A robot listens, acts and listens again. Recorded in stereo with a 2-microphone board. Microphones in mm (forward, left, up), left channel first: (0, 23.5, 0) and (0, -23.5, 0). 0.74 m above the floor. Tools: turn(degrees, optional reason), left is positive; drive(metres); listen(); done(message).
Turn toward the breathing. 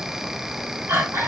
turn(degrees=-65, reason="The breathing: about 65° right or 115° right.")
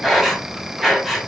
done("Facing the breathing.")